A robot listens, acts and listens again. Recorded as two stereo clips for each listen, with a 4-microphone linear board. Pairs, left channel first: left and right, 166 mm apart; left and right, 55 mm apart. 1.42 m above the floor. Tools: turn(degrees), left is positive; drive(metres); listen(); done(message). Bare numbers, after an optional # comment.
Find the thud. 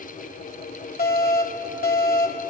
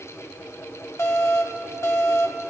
listen()
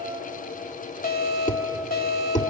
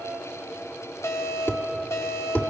# The thud: about 45° left or 135° left.
turn(45)
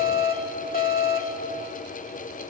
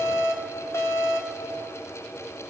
listen()
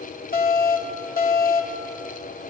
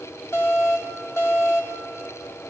done("I heard a thud, but can't make it out now. It was about straight ahead or 90° left.")